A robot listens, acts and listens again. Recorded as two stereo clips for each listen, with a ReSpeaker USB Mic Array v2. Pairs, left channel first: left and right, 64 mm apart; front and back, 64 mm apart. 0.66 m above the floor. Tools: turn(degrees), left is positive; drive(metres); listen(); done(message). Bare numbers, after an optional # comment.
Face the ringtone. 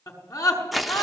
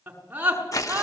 listen()
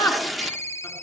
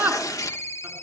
# The ringtone: 45° left.
turn(45)
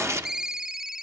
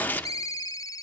# The ringtone is now 10° right.
turn(-10)
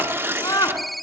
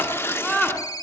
done("Facing the ringtone.")